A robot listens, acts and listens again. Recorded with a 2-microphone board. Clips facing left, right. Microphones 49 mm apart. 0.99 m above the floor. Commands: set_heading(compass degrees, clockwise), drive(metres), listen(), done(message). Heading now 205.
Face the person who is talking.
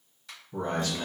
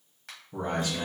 set_heading(235)
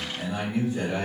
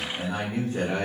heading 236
set_heading(1)
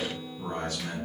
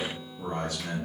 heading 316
done("Facing the man speaking.")